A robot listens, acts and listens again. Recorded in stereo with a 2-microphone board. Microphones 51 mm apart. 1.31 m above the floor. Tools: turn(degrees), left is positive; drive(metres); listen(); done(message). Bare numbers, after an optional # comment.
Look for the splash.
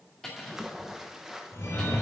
turn(-30)
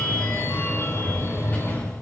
listen()
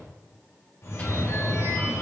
done("I heard a splash, but can't make it out now. It was about 25° left or 145° right.")